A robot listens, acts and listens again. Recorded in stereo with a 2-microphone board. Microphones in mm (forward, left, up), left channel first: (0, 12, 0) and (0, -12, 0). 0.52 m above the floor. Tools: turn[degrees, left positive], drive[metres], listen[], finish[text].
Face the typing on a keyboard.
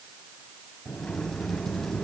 Action: listen[]
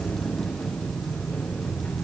Action: listen[]
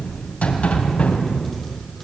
Action: finish[I can't make out typing on a keyboard to turn to.]